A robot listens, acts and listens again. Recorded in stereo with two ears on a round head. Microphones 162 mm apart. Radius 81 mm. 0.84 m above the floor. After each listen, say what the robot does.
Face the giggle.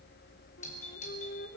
Keep listening.
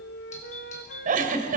Turn 45° right.
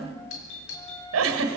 Turn 90° right.
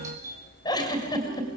Turn 20° left.
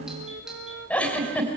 Facing the giggle.